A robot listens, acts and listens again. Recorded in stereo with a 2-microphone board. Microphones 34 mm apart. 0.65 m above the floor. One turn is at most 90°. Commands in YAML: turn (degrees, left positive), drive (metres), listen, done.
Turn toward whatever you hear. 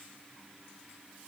listen: true
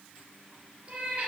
turn: -40
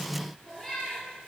done: "Found it: a cat meowing, straight ahead, 2 to 4 m away."